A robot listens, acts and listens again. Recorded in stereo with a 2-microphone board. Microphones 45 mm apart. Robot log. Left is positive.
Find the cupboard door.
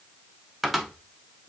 cmd yaw -30
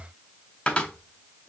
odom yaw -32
note: So it is at 25° left.
cmd yaw +25
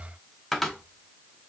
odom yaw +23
end: Found it: a cupboard door, straight ahead.